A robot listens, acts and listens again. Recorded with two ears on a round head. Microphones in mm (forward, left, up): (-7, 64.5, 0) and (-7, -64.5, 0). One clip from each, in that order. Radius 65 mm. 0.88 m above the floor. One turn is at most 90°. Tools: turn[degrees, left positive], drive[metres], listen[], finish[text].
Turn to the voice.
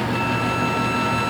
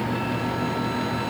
Action: listen[]
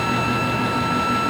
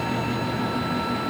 Action: listen[]
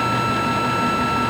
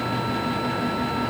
Action: finish[I can't make out anyone speaking.]